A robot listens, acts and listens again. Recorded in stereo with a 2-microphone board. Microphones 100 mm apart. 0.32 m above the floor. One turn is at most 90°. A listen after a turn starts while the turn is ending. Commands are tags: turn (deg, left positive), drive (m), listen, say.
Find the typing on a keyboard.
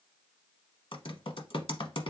<turn deg="65"/>
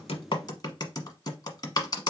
<turn deg="45"/>
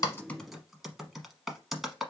<say>Found it: typing on a keyboard, straight ahead.</say>